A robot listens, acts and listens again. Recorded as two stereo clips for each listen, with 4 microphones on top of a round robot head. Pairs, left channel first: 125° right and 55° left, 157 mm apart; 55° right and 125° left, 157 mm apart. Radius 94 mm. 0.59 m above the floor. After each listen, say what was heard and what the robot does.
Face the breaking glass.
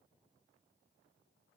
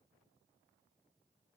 Keep listening.
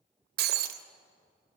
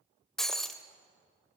The breaking glass: 30° left. Turn 30° left.
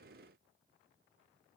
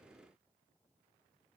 I heard breaking glass from this way, but can't make it out now.